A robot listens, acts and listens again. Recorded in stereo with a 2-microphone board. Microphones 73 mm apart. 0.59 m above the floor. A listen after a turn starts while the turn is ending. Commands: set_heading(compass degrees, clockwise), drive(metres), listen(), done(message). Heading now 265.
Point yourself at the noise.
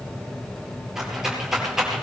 set_heading(295)
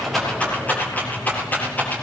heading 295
set_heading(270)
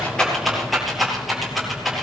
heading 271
done("Found it: a rattle, straight ahead.")